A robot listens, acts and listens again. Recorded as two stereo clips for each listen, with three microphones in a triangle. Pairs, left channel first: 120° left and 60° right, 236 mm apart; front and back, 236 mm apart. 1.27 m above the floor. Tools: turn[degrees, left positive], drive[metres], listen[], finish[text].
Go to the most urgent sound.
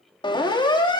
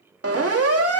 Thought: The siren: 170° right.
Action: turn[-170]
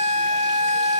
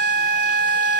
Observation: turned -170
Action: drive[1.0]
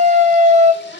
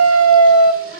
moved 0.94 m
Action: drive[1.0]
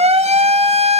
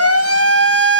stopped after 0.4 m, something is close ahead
Action: finish[I am next to the siren.]